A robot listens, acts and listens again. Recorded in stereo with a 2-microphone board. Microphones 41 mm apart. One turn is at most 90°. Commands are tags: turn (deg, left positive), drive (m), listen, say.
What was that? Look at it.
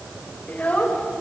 <turn deg="35"/>
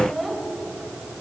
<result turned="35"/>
<say>Found it: a child speaking, straight ahead, 2 to 4 m away.</say>